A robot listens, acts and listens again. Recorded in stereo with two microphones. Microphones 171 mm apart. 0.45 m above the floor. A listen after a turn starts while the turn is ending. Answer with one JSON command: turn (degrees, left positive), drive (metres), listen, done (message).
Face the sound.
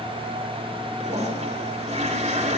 {"turn": -40}
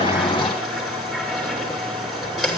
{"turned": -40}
{"done": "Facing the toilet flushing."}